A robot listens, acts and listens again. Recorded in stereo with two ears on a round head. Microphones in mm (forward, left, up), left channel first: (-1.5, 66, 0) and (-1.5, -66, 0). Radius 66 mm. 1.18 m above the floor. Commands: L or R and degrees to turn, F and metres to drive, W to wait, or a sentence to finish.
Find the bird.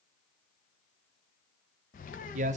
L60
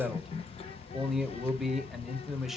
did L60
L45
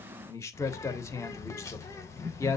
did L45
L20
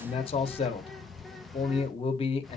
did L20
Found it: a bird, straight ahead, 1 to 2 m away.